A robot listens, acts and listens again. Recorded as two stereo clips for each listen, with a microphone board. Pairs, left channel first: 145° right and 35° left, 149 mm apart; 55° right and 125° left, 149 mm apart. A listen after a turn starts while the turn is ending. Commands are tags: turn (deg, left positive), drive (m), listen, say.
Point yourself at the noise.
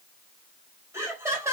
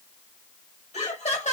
<turn deg="-35"/>
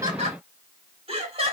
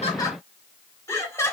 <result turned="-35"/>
<turn deg="10"/>
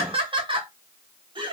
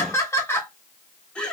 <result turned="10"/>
<turn deg="25"/>
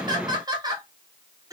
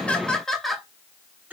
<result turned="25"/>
<turn deg="60"/>
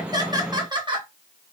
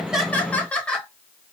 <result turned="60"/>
<turn deg="25"/>
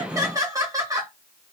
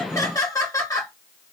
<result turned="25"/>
<turn deg="-10"/>
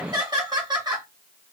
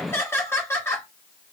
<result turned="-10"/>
<say>Facing the laughter.</say>